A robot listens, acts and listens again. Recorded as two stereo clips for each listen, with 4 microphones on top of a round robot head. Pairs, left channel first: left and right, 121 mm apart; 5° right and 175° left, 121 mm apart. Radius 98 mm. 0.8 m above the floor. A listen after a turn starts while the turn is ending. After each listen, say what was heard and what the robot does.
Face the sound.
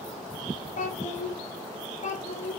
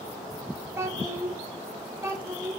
The child speaking: 105° left. Turn 105° left.
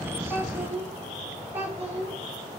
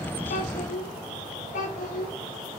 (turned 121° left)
The child speaking is now 15° right. Turn 15° right.
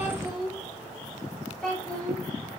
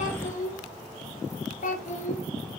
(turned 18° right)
Facing the child speaking.